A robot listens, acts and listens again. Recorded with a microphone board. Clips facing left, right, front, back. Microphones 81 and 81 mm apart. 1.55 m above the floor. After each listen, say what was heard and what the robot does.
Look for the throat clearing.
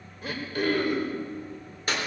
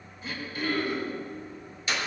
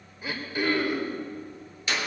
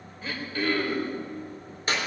The throat clearing: 75° left. Turn 75° left.
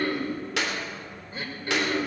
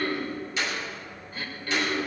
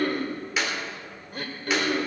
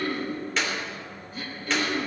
The throat clearing is now 25° left. Turn 25° left.
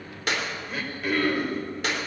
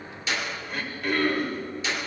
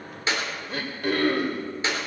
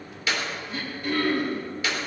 Facing the throat clearing, 2 to 4 m away.